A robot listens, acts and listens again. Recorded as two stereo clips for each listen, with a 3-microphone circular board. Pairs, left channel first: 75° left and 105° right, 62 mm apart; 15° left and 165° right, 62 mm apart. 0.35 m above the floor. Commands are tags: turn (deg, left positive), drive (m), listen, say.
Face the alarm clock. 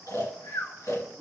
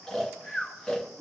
<listen/>
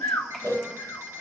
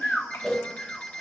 <turn deg="-55"/>
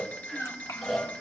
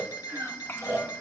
<turn deg="10"/>
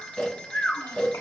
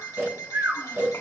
<say>Facing the alarm clock.</say>